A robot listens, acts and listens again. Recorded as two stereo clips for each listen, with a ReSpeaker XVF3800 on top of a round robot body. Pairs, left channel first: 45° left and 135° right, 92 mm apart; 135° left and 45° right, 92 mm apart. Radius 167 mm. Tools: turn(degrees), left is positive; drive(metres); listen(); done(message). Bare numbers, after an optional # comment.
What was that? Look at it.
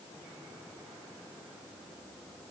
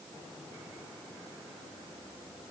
listen()
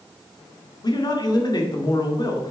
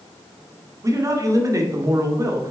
done("Facing the man speaking, 2 to 4 m away.")